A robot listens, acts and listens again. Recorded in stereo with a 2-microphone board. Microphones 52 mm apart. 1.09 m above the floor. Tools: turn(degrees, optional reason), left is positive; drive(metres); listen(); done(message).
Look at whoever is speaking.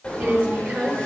turn(degrees=-30, reason="The woman speaking: about 30° right or 150° right.")
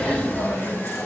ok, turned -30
listen()
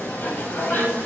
listen()
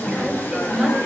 done("Facing the woman speaking, over 4 m away.")